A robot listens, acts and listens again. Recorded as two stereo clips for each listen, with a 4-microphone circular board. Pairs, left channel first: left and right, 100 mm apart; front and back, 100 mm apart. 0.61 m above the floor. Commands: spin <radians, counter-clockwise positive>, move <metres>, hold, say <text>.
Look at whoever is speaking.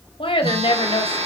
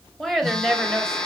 spin 1.48
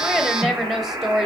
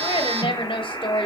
say Facing the woman speaking.